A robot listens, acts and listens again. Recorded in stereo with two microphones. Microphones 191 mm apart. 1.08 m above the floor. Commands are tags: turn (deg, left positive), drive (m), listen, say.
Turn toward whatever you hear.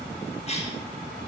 <turn deg="35"/>
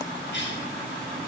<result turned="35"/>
<turn deg="110"/>
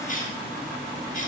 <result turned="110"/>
<turn deg="45"/>
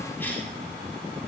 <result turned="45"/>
<listen/>
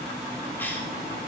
<listen/>
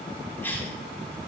<turn deg="10"/>
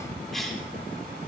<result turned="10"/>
<say>Facing the cough, over 4 m away.</say>